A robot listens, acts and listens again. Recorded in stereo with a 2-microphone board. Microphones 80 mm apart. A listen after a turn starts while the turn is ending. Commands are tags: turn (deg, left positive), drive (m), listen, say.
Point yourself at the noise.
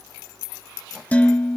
<turn deg="20"/>
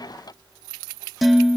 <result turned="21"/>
<say>Found it: dishes clattering, straight ahead, 1 to 2 m away.</say>